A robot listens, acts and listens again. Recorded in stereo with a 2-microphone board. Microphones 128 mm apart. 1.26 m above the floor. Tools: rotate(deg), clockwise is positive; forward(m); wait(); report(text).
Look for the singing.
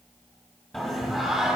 rotate(-30)
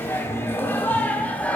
rotate(-165)
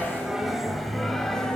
report("Found it: singing, straight ahead.")